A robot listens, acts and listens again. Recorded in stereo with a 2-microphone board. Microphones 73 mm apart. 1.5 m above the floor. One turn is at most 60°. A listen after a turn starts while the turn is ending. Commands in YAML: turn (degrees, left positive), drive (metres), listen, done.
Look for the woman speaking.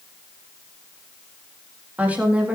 turn: -15
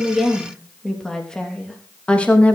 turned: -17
turn: 20
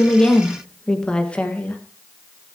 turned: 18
turn: 20
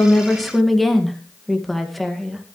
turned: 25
done: "Found it: a woman speaking, straight ahead."